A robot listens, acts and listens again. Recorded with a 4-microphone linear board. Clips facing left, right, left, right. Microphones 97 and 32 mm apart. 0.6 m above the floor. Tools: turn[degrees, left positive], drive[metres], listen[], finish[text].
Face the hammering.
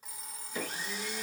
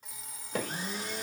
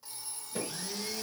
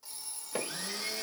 Action: turn[-90]
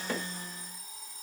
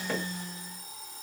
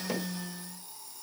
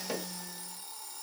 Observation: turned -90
Action: listen[]
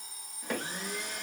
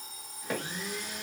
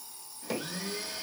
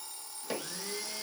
Action: finish[Facing the hammering.]